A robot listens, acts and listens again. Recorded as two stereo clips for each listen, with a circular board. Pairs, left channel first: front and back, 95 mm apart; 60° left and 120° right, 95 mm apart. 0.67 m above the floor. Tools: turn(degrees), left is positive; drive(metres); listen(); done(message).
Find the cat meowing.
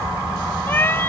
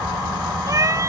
turn(degrees=-65)
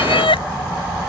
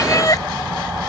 turn(degrees=10)
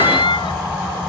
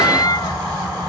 turn(degrees=20)
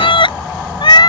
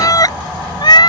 turn(degrees=30)
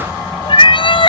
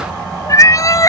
turn(degrees=10)
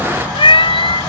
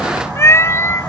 done("Facing the cat meowing.")